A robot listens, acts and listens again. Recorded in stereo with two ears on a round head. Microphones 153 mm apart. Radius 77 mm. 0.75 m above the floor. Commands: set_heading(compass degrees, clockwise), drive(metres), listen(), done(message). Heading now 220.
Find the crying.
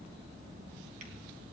listen()
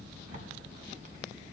listen()
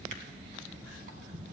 done("I can't make out crying to turn to.")